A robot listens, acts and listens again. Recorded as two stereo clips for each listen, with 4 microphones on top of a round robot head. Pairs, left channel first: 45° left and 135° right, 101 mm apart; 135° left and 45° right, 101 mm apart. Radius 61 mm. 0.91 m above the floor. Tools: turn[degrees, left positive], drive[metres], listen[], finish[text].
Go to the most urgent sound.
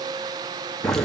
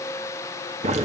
Action: listen[]
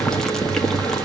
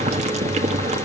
Action: listen[]
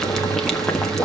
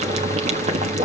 Action: finish[I can't make out anything urgent, only boiling.]